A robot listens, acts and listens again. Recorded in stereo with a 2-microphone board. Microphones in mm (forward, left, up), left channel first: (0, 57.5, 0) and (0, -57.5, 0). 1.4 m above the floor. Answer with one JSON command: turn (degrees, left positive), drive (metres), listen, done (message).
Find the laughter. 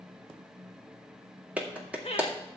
{"turn": 65}
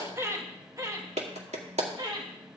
{"turn": -40}
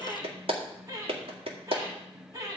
{"turn": -30}
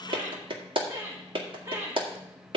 {"turn": -25}
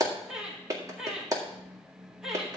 {"done": "Facing the laughter."}